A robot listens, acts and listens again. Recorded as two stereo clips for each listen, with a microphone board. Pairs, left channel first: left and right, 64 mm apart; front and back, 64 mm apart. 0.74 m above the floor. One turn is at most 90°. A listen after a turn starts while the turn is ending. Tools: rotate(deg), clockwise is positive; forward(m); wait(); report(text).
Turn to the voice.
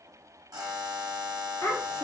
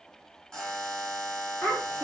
rotate(-65)
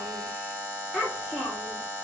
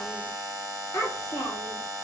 report("Facing the child speaking.")